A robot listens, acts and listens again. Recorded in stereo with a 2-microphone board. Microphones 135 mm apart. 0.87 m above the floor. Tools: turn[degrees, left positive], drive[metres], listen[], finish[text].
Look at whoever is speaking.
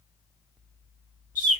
Action: listen[]
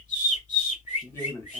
Thought: The man speaking: about 20° left or 160° left.
Action: turn[20]
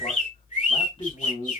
Thought: So it is at 140° left.
Action: turn[140]
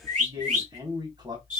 Thought: The man speaking is now 30° right.
Action: turn[-30]
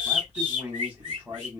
Thought: The man speaking is now 10° right.
Action: turn[-10]
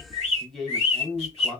Action: finish[Facing the man speaking, 1 to 2 m away.]